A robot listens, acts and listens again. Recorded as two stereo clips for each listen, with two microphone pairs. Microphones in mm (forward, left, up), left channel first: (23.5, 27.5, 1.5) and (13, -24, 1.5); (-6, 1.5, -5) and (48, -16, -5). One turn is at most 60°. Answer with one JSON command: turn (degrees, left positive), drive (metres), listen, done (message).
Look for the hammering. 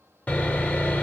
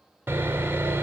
{"listen": true}
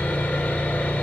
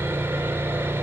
{"listen": true}
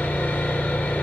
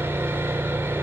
{"done": "I can't make out hammering, only sawing."}